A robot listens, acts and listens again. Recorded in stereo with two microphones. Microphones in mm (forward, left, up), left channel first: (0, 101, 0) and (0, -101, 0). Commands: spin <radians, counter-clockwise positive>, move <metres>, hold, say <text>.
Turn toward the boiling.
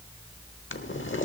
spin 1.31
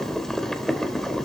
say Facing the boiling.